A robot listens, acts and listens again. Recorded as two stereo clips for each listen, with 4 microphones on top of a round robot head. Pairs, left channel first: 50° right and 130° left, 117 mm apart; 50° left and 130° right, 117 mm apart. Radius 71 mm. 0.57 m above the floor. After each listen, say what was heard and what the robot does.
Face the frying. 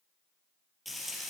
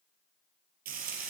The frying: 140° right. Turn 140° right.
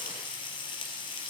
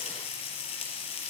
Found it: frying, straight ahead, 2 to 4 m away.